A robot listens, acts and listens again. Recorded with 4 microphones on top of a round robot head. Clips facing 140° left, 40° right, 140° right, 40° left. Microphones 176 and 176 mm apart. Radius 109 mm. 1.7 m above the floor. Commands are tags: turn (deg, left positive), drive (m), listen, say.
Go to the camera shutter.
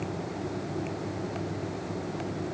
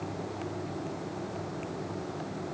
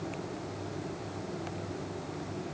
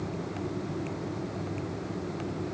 <listen/>
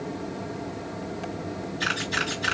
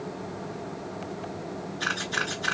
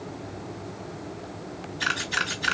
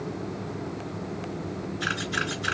<turn deg="-155"/>
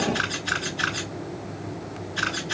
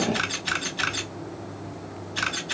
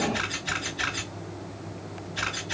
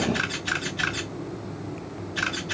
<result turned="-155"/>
<drive m="1.0"/>
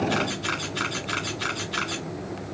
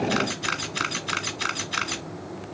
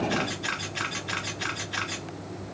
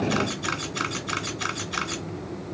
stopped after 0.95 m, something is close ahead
<say>Arrived at the camera shutter, straight ahead.</say>